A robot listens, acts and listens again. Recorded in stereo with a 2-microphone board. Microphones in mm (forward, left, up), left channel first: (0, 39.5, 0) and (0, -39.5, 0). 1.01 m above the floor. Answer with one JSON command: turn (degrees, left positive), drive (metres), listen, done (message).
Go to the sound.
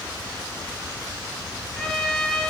{"turn": 30}
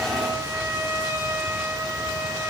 {"turn": -30}
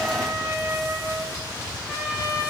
{"turn": -15}
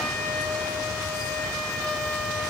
{"drive": 1.0}
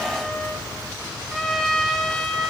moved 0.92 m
{"drive": 1.0}
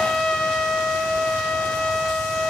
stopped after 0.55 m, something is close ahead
{"done": "Arrived at the trumpet, straight ahead."}